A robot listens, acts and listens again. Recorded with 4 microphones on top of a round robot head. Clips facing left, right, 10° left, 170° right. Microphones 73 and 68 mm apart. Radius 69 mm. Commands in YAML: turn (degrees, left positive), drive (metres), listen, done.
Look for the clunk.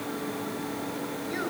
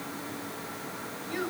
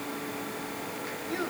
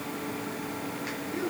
listen: true
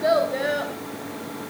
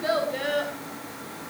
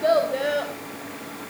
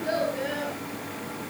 listen: true
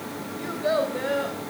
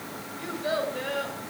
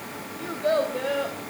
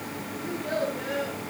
done: "I can't make out a clunk to turn to."